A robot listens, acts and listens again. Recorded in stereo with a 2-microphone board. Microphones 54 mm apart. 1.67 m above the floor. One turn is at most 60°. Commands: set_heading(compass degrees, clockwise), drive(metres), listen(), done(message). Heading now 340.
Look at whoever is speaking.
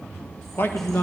set_heading(300)
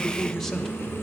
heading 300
done("Facing the man speaking.")